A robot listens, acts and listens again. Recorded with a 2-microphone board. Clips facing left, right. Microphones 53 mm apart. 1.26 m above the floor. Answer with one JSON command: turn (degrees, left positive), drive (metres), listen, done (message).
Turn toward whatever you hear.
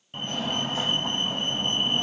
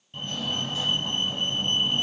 {"turn": 40}
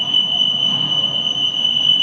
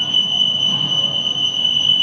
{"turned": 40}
{"turn": 10}
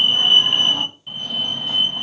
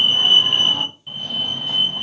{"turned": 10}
{"done": "Facing the fire alarm."}